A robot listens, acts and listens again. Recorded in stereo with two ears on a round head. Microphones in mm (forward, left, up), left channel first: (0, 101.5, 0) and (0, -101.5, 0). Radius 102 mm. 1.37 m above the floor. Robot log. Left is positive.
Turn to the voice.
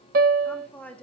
cmd yaw +30
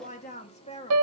note: So it is at 155° left.
cmd yaw +155
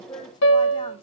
note: The woman speaking is now 20° left.
cmd yaw +20
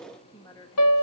note: The woman speaking is now 20° left.
cmd yaw +20
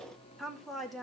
end: Facing the woman speaking.